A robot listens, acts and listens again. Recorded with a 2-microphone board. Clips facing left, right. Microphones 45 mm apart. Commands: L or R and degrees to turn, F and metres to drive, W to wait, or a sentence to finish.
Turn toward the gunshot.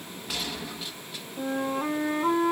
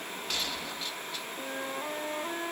L30
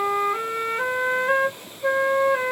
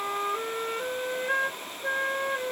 W
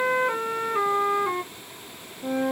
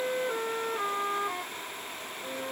I heard a gunshot, but can't make it out now. It was about 25° right or 145° left.